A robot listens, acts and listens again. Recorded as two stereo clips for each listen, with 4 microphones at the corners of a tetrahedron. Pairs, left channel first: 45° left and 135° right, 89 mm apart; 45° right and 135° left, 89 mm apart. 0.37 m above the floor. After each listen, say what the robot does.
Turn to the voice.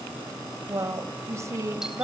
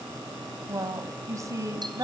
Turn 175° left.
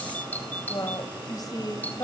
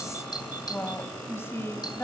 Turn 10° left.
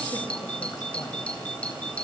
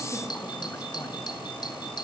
Keep listening.
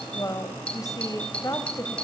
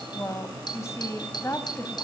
Found it: a woman speaking, straight ahead.